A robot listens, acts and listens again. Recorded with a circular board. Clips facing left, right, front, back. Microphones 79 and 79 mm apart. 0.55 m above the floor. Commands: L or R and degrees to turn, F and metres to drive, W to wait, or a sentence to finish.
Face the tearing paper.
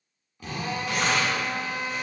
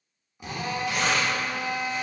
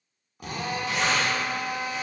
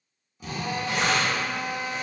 L130
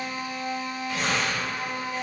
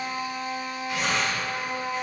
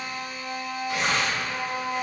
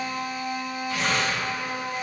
R10
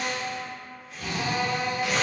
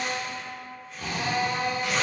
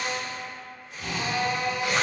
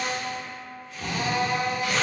Found it: tearing paper, straight ahead.